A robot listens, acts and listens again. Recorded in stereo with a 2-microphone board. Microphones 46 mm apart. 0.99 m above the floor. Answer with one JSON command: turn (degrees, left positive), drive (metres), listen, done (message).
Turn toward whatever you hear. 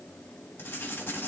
{"turn": 50}
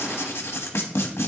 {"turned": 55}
{"turn": 75}
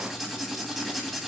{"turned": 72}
{"done": "Facing the writing, 1 to 2 m away."}